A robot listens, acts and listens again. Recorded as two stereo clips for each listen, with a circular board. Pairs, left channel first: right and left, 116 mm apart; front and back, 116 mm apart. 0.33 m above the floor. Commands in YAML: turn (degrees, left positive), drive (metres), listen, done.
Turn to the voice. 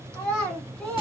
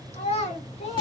turn: -10
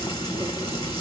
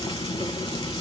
listen: true
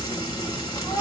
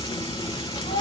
listen: true
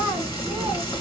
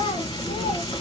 done: "I heard a child speaking from this way, but can't make it out now."